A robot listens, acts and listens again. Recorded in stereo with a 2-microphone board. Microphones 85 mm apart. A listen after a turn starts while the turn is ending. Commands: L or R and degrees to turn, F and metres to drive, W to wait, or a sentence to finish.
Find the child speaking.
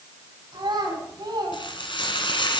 R65
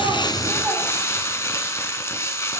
W
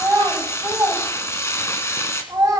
R35
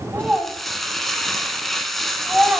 Found it: a child speaking, straight ahead, 2 to 4 m away.